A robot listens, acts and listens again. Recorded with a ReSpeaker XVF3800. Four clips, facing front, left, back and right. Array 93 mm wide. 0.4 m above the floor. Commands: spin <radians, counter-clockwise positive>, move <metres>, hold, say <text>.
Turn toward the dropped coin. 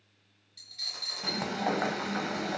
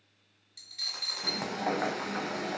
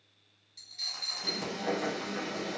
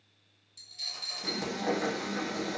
spin 1.66
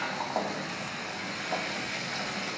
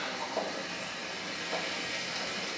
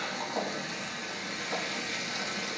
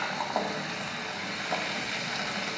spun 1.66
say I heard a dropped coin from this way, but can't make it out now.